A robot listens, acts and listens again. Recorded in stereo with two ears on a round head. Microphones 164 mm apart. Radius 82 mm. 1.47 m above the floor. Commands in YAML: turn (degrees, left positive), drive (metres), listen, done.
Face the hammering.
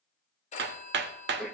turn: -65
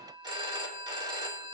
listen: true
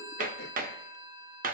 turn: -45
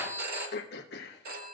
listen: true
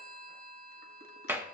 turn: -10
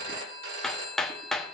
done: "Facing the hammering, under 1 m away."